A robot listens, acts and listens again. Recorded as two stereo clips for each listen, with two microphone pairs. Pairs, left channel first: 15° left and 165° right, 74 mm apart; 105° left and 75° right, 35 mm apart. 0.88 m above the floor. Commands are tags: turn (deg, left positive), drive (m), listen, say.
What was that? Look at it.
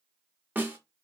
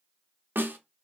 <turn deg="-100"/>
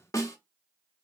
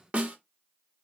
<turn deg="-30"/>
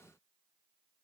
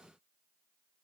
<listen/>
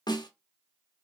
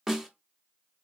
<say>Found it: a snare drum, straight ahead, 1 to 2 m away.</say>